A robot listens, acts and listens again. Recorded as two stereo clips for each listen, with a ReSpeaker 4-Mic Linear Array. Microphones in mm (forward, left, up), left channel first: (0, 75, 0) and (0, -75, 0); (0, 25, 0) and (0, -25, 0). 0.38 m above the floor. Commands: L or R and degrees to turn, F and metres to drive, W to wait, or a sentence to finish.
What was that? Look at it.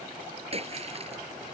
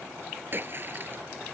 R45
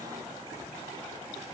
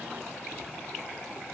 W
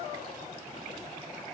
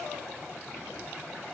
I heard a splash, but can't make it out now. It was about straight ahead or 90° right.